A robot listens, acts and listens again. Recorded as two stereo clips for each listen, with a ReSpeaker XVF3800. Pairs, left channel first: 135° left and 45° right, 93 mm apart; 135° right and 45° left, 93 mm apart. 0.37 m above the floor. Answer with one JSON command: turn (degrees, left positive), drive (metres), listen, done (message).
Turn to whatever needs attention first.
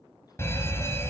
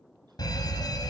{"turn": -165}
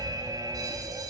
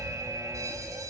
{"done": "Facing the fire alarm, 2 to 4 m away."}